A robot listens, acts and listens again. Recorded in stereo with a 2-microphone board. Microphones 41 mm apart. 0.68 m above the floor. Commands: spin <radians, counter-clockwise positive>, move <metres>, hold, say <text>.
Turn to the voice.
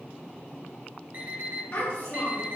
spin 1.22
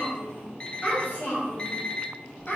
spin 0.87
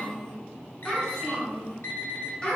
spin 0.35
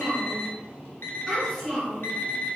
say Facing the child speaking, 2 to 4 m away.